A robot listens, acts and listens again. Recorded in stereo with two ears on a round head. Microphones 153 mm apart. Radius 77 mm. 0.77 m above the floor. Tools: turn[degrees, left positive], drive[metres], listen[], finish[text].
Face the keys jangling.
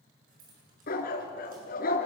Thought: The keys jangling: about 50° right or 130° right.
Action: turn[-50]
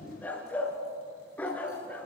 Action: listen[]
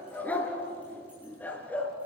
Action: listen[]
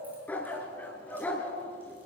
Action: finish[I heard keys jangling, but can't make it out now. It was about straight ahead or 80° right.]